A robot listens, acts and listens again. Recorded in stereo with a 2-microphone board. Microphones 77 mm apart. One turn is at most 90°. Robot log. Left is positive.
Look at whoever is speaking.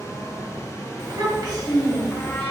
note: The child speaking: about 50° right or 130° right.
cmd yaw -50
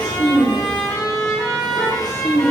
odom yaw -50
note: So it is at 55° left.
cmd yaw +55
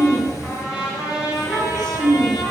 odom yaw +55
end: Facing the child speaking.